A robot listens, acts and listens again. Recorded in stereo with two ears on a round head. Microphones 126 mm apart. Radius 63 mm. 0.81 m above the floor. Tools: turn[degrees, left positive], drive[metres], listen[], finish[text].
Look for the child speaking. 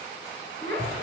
Thought: The child speaking: about 40° left or 140° left.
Action: turn[40]
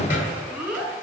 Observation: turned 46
Thought: So it is at 10° right.
Action: turn[-10]
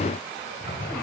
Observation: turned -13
Action: listen[]
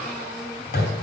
Action: listen[]
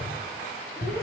Action: finish[Facing where the child speaking came from. I can't hear it now.]